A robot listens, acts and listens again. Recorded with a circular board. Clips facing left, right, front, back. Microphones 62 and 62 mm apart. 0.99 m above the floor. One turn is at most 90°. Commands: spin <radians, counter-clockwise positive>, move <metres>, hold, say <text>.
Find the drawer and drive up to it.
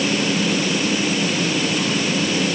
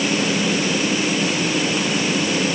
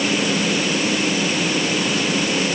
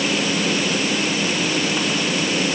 hold
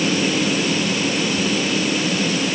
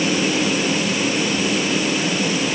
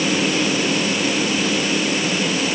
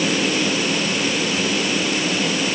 hold
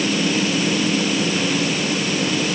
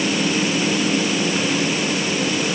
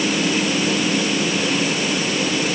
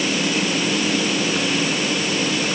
say I can't make out a drawer.